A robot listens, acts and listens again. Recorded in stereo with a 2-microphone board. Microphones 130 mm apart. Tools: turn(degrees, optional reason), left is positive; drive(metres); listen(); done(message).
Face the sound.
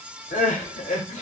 turn(degrees=90)
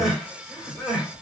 done("Found it: crying, straight ahead.")